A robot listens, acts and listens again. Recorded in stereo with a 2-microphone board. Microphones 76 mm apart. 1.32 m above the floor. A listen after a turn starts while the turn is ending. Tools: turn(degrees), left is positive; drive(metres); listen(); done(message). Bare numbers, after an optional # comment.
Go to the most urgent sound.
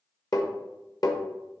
listen()
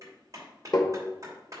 listen()
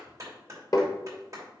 done("I can't make out anything urgent, only a clap and tapping.")